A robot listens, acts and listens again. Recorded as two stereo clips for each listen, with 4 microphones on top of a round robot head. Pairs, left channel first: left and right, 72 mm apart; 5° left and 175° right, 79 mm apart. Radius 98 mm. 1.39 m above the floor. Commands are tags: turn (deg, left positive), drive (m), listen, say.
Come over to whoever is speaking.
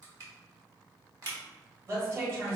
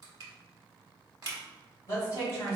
<turn deg="-40"/>
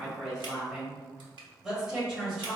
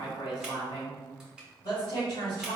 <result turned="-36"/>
<drive m="1.0"/>
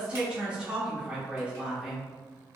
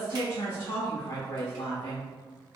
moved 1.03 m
<turn deg="-15"/>
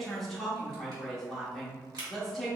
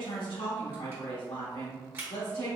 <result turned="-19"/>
<drive m="1.0"/>
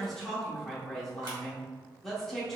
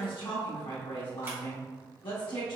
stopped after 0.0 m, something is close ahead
<say>I am next to the woman speaking.</say>